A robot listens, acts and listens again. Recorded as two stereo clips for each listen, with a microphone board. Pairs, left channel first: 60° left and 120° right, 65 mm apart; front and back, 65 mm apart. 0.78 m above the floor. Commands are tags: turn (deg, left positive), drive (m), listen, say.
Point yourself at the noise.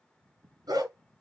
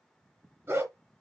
<turn deg="-135"/>
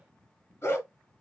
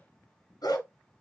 <say>Facing the dog barking, 2 to 4 m away.</say>